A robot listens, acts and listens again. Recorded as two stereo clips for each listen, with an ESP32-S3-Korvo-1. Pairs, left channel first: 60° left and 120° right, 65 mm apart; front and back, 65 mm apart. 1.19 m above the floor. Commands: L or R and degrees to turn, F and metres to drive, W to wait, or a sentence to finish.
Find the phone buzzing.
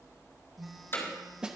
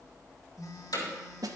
R30
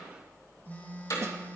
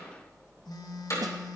Found it: a phone buzzing, straight ahead, 1 to 2 m away.